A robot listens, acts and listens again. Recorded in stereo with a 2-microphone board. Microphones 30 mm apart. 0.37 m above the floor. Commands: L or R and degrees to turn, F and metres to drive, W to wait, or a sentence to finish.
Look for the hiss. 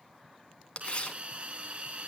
R45
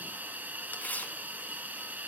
R90
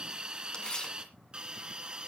R30
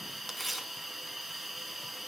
Facing the hiss, 2 to 4 m away.